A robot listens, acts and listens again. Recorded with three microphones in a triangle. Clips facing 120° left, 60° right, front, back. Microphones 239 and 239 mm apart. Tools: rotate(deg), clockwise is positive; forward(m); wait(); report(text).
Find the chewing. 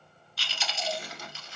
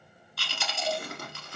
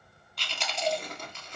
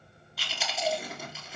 rotate(95)
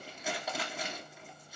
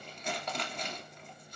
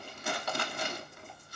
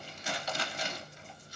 rotate(-35)
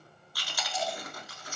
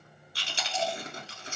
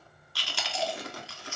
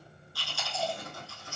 report("Facing the chewing, 1 to 2 m away.")